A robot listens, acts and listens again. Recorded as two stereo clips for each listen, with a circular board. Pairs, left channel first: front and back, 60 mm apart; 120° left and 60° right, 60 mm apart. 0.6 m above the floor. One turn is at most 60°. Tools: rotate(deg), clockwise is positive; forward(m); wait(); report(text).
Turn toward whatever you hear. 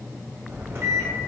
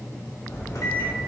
rotate(-60)
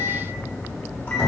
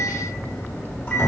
rotate(-60)
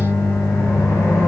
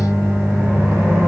rotate(10)
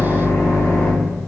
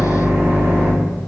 report("Facing the microwave.")